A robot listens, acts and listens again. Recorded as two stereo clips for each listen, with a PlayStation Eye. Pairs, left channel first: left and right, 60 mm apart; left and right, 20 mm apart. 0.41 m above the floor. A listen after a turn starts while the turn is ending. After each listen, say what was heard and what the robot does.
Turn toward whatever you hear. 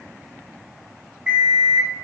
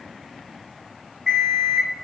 The alarm clock: about 20° right or 160° right. Turn 20° right.
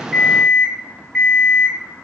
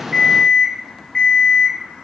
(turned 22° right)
Found it: an alarm clock, straight ahead, 1 to 2 m away.